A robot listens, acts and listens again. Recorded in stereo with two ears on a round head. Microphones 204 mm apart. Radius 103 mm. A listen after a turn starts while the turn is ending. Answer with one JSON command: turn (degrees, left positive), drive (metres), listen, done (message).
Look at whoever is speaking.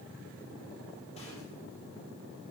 {"listen": true}
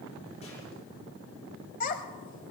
{"turn": 35}
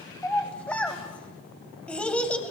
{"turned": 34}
{"done": "Found it: a child speaking, straight ahead."}